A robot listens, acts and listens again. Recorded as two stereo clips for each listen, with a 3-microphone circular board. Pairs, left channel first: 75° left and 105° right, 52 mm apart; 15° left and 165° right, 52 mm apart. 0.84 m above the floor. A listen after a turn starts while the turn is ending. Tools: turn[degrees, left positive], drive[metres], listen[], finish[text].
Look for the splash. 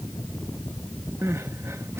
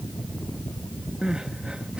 Action: listen[]
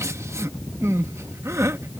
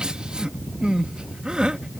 Action: listen[]
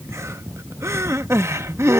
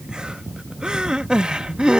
Action: finish[I can't make out a splash, only crying.]